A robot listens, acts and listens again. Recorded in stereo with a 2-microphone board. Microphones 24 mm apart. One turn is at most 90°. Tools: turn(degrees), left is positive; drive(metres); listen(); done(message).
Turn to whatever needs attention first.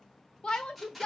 turn(degrees=55)
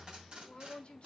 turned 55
turn(degrees=60)
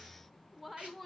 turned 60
done("Facing the shout.")